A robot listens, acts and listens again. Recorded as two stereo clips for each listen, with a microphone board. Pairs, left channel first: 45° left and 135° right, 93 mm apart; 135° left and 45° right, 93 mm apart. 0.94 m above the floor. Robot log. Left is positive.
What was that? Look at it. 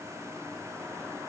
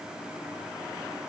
cmd idle
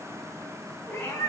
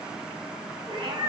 note: The cat meowing: 25° right.
cmd yaw -25
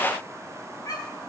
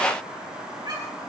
end: Found it: a cat meowing, straight ahead.